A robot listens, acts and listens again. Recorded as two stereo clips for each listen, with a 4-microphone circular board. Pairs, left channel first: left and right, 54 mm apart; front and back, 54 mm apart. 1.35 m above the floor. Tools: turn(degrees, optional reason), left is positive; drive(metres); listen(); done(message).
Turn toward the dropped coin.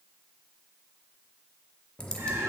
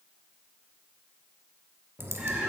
turn(degrees=160, reason="The dropped coin: 160° left.")
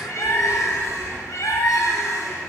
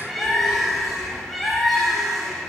done("Facing where the dropped coin came from. I can't hear it now.")